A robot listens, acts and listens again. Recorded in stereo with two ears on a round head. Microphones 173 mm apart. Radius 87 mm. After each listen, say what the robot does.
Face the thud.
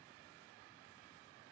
Keep listening.
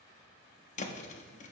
Turn 40° left.
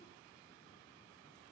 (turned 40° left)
Keep listening.
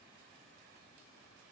I heard a thud, but can't make it out now. It was about straight ahead or 100° left.